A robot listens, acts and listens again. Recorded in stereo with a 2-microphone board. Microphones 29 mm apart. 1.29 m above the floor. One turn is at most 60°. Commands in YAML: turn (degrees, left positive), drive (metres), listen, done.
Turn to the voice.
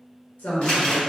turn: 60
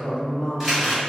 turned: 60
turn: 30
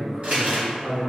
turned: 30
turn: -10
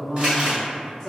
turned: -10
done: "Facing the woman speaking."